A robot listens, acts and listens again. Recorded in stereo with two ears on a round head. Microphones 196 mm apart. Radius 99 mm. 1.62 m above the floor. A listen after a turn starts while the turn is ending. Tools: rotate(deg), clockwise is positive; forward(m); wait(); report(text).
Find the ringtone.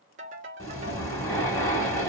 rotate(35)
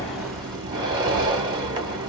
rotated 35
wait()
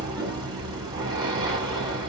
wait()
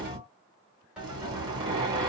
report("I heard a ringtone, but can't make it out now. It was about straight ahead or 110° right.")